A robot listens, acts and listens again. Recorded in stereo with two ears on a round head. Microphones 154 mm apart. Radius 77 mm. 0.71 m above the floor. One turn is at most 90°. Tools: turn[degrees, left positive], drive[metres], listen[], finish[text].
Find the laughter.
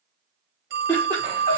Action: turn[30]
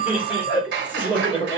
Thought: So it is at 10° right.
Action: turn[-10]
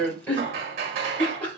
Thought: The laughter is now 10° left.
Action: turn[10]
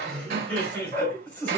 Thought: The laughter is now 10° left.
Action: turn[10]
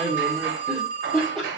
Action: finish[Found it: laughter, straight ahead.]